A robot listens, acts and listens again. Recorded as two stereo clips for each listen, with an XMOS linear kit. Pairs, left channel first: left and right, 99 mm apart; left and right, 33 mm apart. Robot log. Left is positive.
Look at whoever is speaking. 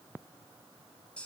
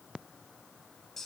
cmd idle
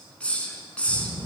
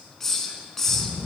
note: The child speaking: about 30° right or 150° right.
cmd yaw -30
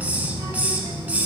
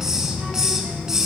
note: So it is at 120° right.
cmd yaw -120
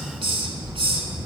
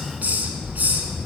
note: The child speaking is now 20° right.
cmd yaw -20
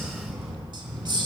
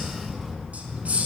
end: Facing the child speaking, 2 to 4 m away.